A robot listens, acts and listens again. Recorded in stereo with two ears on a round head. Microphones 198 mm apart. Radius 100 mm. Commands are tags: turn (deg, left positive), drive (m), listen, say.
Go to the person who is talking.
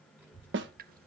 <turn deg="-30"/>
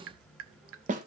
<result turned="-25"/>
<turn deg="-145"/>
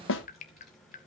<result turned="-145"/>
<drive m="1.0"/>
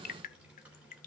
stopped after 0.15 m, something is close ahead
<say>Blocked. The child speaking is further on, straight ahead.</say>